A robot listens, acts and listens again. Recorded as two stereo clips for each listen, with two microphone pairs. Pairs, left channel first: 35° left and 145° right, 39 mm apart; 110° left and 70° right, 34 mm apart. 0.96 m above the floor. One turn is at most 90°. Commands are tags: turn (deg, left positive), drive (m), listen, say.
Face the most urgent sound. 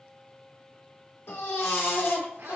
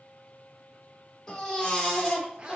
<turn deg="40"/>
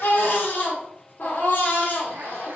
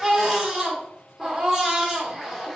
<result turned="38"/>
<say>Facing the baby crying.</say>